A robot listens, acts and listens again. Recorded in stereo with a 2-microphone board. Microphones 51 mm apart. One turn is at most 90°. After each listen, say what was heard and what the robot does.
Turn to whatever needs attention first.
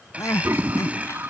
Turn 90° left.
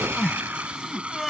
Facing the crying.